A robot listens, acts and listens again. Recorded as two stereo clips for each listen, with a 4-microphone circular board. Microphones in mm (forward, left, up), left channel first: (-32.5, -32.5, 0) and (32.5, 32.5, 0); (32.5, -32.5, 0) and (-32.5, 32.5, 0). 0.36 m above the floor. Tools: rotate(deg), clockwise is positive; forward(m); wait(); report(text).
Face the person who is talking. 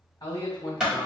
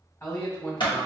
rotate(100)
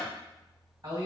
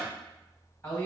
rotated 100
rotate(-15)
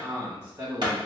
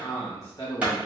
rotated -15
report("Found it: a man speaking, straight ahead, 1 to 2 m away.")